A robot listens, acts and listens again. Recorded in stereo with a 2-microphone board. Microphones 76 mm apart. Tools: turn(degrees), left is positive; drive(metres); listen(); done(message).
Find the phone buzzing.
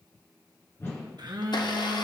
turn(degrees=-70)
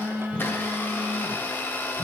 turn(degrees=-15)
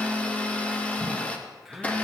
done("Found it: a phone buzzing, straight ahead, under 1 m away.")